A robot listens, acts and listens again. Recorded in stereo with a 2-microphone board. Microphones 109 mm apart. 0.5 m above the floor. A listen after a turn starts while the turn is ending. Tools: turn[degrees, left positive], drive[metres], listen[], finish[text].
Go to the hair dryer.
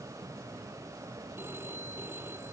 Action: listen[]
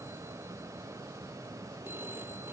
Action: listen[]
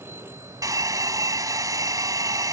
Thought: The hair dryer: about 35° right or 145° right.
Action: turn[-35]
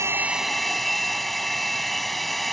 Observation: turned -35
Action: drive[1.0]
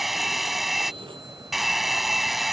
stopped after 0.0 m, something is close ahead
Action: finish[Blocked. The hair dryer is further on, straight ahead.]